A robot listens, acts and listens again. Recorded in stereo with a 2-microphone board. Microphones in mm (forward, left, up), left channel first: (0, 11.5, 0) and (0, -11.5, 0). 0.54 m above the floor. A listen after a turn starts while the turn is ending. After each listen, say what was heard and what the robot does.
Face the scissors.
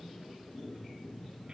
Keep listening.
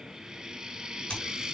The scissors: about 50° left or 130° left. Turn 50° left.
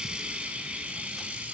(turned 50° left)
Keep listening.
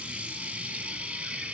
Keep listening.
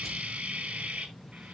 I heard scissors, but can't make it out now. It was about straight ahead or 80° left.